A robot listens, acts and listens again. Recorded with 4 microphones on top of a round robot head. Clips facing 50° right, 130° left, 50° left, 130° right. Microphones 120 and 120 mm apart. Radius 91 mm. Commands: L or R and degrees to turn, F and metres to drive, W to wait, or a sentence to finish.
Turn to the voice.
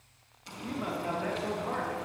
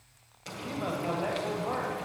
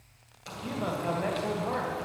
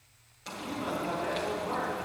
L70
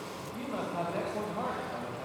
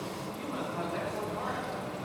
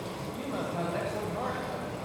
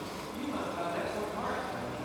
L10
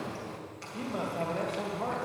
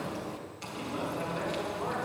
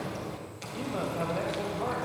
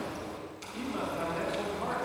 Found it: a man speaking, straight ahead.